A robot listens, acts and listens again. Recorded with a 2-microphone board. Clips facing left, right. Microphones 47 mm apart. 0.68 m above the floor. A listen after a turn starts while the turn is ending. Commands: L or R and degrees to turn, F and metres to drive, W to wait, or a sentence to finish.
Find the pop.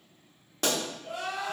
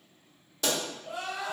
L50
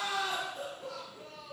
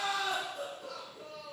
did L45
W
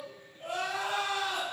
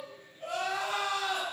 I heard a pop, but can't make it out now. It was about 5° left or 85° left.